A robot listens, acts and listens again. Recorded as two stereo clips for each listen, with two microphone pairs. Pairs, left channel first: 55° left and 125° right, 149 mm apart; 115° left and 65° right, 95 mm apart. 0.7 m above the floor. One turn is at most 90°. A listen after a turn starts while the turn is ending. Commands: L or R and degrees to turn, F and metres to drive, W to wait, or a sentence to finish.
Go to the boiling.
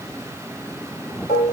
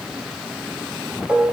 W
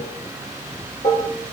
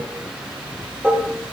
W
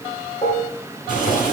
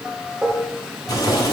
L65
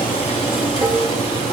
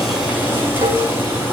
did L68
F1.0
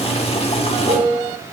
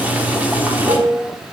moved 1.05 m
F1.0
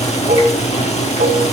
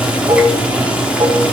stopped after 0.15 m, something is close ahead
L15
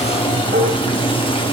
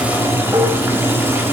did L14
I am next to the boiling.